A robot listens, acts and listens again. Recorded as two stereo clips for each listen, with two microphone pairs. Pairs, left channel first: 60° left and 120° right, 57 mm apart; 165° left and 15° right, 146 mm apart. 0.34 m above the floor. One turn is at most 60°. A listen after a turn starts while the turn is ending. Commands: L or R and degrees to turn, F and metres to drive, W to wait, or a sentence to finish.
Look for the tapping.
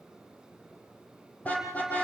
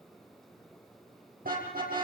W
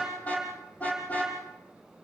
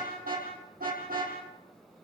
W
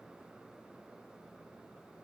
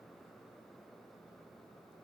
I can't make out tapping, only a car horn.